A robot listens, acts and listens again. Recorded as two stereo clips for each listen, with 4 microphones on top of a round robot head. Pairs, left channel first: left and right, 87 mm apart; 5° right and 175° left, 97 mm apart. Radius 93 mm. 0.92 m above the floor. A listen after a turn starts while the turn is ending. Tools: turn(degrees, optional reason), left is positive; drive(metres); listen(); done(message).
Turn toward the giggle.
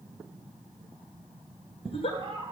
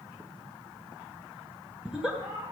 turn(degrees=95, reason="The giggle: 95° left.")
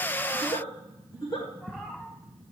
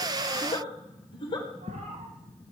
turn(degrees=35, reason="The giggle is now 35° left.")
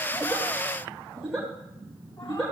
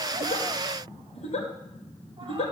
done("Found it: a giggle, straight ahead.")